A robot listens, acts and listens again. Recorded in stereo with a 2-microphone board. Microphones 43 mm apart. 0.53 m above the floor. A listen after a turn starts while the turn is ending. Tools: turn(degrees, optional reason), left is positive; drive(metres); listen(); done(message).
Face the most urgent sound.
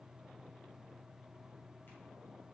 listen()
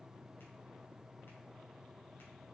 listen()
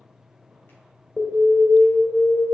turn(degrees=65, reason="The alarm: about 65° left or 115° left.")
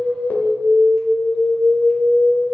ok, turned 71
turn(degrees=40, reason="So it is at 40° left.")
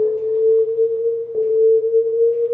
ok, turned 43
done("Found it: an alarm, straight ahead.")